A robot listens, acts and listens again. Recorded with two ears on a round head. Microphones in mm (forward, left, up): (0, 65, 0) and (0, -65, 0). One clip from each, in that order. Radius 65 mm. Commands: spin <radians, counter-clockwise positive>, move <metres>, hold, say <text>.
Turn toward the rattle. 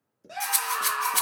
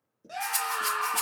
spin 0.79
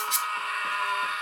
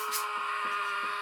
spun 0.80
spin 1.57
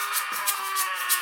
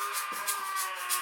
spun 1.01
spin 0.61
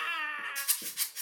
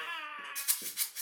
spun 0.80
spin -0.26
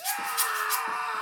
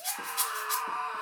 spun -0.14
say Facing the rattle.